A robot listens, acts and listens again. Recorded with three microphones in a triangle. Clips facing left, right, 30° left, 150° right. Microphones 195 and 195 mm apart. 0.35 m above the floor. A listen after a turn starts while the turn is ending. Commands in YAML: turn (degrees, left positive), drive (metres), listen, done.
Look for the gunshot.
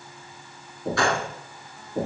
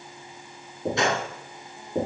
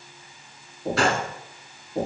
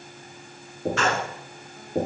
turn: -25
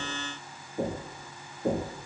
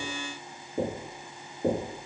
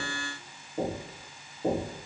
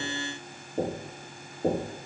done: "I heard a gunshot from this way, but can't make it out now."